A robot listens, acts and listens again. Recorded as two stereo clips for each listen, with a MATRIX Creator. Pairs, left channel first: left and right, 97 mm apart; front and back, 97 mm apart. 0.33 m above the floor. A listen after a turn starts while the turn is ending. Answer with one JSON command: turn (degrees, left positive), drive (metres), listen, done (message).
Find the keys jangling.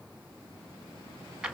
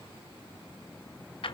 {"listen": true}
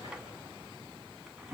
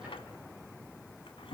{"listen": true}
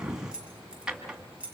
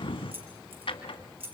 {"turn": -165}
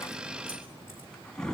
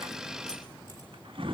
{"listen": true}
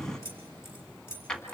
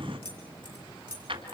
{"turn": 30}
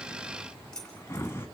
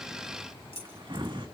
{"turn": 10}
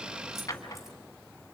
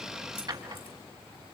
{"listen": true}
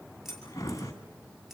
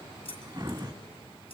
{"done": "Found it: keys jangling, straight ahead, over 4 m away."}